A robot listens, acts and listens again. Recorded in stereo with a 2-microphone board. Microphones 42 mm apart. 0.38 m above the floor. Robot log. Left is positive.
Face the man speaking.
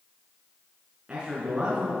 note: The man speaking: about 25° right or 155° right.
cmd yaw -25
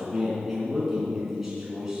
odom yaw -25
cmd yaw -30
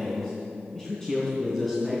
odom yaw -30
note: So it is at 10° left.
cmd yaw +10
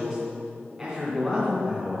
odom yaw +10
end: Facing the man speaking.